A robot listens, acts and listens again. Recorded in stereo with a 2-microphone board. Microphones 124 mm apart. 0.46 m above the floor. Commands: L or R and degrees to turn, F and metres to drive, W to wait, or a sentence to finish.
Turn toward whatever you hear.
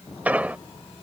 R30
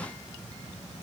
W
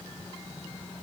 I heard an explosion, but can't make it out now. It was about 15° left or 135° right.